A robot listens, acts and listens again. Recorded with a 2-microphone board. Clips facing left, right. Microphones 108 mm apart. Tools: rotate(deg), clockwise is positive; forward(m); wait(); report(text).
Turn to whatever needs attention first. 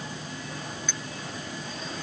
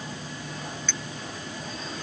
wait()
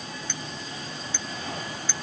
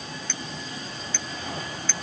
wait()
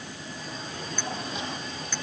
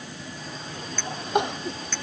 rotate(70)
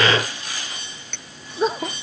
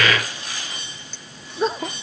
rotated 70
report("Facing the crying.")